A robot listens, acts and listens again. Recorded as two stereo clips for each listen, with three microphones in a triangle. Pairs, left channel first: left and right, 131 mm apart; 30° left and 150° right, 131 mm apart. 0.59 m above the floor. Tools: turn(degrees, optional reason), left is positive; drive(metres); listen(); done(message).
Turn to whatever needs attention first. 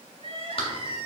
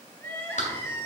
turn(degrees=-45, reason="The crying: 45° right.")
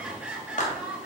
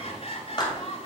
turn(degrees=-10, reason="The crying is now 10° right.")
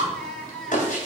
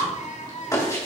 done("Found it: crying, straight ahead.")